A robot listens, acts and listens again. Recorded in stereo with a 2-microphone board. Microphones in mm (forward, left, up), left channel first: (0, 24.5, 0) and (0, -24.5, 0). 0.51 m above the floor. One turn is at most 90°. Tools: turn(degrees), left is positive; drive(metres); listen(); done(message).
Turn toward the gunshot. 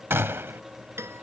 turn(degrees=-65)
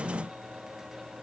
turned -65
listen()
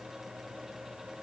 done("I heard a gunshot, but can't make it out now. It was about straight ahead or 50° right.")